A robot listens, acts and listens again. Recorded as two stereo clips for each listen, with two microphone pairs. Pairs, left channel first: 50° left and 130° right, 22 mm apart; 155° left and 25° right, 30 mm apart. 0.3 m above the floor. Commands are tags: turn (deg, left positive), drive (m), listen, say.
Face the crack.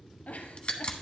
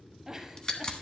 <turn deg="100"/>
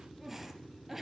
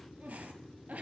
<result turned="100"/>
<say>Facing where the crack came from. I can't hear it now.</say>